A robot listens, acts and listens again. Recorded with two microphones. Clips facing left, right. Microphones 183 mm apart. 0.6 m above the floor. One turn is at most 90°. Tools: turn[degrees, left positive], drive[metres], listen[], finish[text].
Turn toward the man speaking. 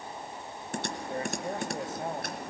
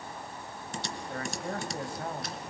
Thought: The man speaking: about 20° left or 160° left.
Action: turn[20]
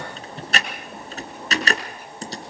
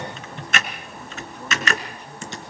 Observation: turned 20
Action: listen[]
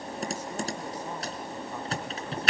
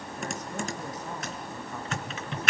Action: listen[]
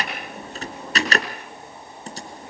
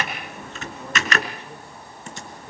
Action: finish[I heard a man speaking, but can't make it out now. It was about straight ahead or 140° left.]